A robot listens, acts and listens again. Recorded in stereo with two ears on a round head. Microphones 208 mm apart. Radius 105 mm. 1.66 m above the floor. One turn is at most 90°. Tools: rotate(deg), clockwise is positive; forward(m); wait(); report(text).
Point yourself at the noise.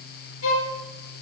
rotate(-60)
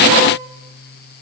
wait()
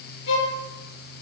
rotate(-55)
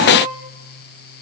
report("Facing the violin, over 4 m away.")